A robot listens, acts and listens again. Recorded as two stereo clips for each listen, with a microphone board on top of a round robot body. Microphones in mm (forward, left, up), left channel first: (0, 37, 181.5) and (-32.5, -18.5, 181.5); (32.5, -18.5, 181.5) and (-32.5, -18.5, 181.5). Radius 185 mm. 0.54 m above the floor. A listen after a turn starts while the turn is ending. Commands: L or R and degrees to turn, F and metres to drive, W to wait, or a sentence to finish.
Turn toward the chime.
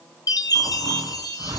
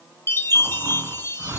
L50
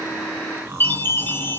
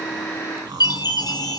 Found it: a chime, straight ahead.